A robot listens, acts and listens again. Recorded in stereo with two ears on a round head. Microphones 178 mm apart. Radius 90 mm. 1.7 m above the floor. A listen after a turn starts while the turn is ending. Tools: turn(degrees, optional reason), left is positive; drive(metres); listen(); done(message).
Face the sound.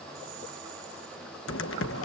turn(degrees=65, reason="The typing on a keyboard: about 65° left or 115° left.")
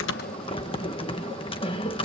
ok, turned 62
turn(degrees=30, reason="So it is at 30° left.")
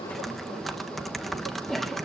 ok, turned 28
done("Facing the typing on a keyboard.")